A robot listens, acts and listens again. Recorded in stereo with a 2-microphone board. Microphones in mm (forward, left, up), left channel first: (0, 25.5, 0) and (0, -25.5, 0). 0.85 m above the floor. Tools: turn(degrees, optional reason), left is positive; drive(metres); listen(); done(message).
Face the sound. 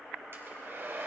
turn(degrees=-50, reason="The hair dryer: about 50° right or 130° right.")
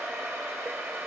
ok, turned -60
turn(degrees=-65, reason="So it is at 65° right.")
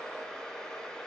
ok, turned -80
turn(degrees=15, reason="The hair dryer is now 15° left.")
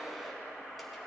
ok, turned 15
listen()
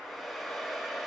done("Facing the hair dryer, 1 to 2 m away.")